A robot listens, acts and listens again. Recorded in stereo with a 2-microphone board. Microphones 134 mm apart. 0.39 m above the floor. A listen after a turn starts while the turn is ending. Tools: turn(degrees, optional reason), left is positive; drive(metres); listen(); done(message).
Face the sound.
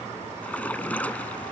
turn(degrees=30)
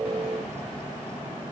listen()
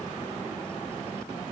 done("I heard a splash, but can't make it out now. It was about 20° right or 140° left.")